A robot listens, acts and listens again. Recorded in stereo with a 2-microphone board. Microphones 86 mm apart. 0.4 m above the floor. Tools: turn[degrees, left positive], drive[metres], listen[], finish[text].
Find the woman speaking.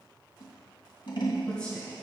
Action: turn[30]
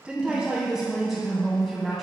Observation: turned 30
Action: turn[30]
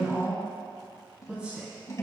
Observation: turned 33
Thought: So it is at 15° right.
Action: turn[-15]
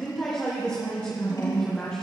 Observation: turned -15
Thought: The woman speaking is now 10° left.
Action: turn[10]
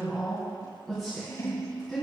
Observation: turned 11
Action: finish[Facing the woman speaking, 2 to 4 m away.]